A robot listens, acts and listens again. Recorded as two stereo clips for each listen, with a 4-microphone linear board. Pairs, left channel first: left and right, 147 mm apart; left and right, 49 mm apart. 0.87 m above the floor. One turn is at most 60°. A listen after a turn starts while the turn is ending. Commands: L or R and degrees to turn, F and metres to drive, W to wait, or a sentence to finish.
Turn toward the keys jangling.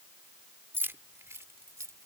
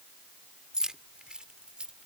R20
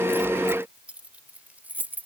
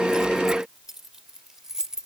R30
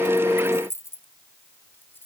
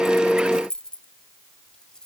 L15
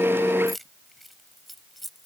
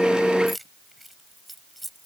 Found it: keys jangling, straight ahead.